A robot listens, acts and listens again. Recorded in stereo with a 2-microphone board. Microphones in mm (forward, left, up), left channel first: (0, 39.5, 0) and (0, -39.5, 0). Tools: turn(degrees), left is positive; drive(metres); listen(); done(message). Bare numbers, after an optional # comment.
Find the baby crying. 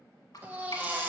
# The baby crying: about 25° right or 155° right.
turn(-25)
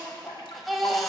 done("Found it: a baby crying, straight ahead.")